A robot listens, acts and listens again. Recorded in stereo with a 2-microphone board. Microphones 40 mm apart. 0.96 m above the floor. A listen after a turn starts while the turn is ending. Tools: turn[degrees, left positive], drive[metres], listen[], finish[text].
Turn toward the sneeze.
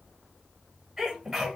Action: turn[-30]
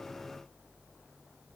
Action: listen[]
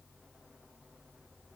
Action: finish[I heard a sneeze, but can't make it out now. It was about 25° left or 145° right.]